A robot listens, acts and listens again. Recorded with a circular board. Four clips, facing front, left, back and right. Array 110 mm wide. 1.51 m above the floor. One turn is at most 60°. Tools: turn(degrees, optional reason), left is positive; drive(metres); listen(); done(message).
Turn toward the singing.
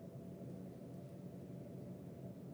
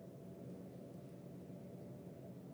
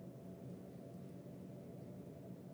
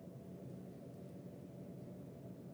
listen()
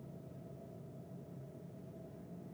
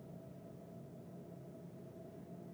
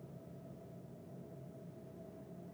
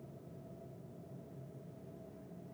listen()
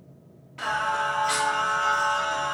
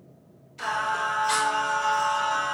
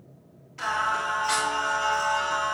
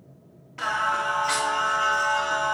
turn(degrees=-60, reason="The singing: 65° right.")
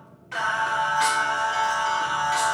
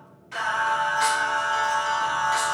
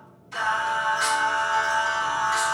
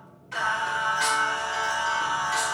done("Found it: singing, straight ahead.")